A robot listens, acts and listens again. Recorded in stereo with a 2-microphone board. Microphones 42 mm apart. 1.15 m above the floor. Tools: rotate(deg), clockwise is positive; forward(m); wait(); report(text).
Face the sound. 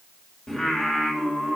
rotate(30)
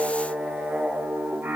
rotate(125)
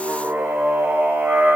rotate(45)
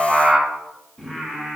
rotate(-15)
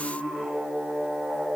report("Facing the singing, 2 to 4 m away.")